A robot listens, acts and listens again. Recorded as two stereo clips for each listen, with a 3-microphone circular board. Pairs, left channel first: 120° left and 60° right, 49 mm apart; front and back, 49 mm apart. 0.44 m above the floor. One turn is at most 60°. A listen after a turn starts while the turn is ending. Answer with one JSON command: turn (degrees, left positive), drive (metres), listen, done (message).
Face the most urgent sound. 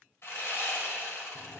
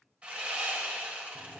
{"listen": true}
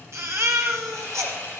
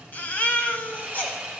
{"turn": -55}
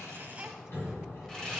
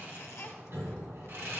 {"listen": true}
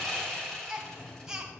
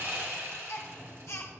{"turn": 15}
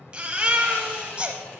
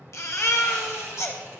{"done": "Facing the baby crying."}